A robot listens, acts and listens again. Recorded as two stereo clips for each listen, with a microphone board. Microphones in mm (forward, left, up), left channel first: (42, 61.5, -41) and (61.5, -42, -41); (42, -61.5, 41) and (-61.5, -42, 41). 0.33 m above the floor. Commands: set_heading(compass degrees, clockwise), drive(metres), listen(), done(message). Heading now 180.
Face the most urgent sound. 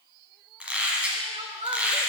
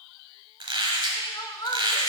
set_heading(240)
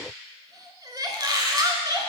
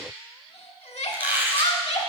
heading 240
set_heading(265)
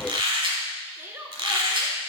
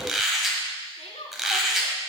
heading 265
set_heading(275)
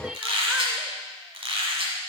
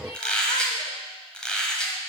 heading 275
listen()
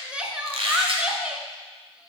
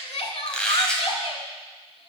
done("Found it: crying, straight ahead, under 1 m away.")